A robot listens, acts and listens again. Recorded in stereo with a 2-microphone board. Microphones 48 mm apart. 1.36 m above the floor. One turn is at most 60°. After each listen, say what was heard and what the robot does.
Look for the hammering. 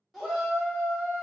Keep listening.
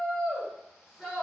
Keep listening.
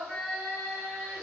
I can't make out hammering, only a shout.